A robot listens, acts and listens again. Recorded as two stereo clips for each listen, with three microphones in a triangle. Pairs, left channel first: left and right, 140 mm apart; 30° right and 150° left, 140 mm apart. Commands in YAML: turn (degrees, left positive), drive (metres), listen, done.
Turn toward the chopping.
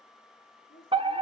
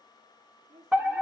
listen: true
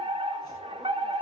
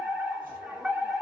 listen: true
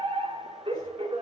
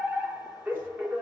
done: "I can't make out chopping, only a woman speaking and a fire alarm."